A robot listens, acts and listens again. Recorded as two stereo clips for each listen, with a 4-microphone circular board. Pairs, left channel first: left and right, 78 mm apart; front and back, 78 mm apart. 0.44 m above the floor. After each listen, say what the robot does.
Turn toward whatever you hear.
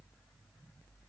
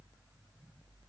Keep listening.
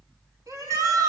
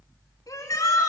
Turn 45° right.
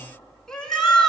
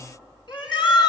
Facing the shout.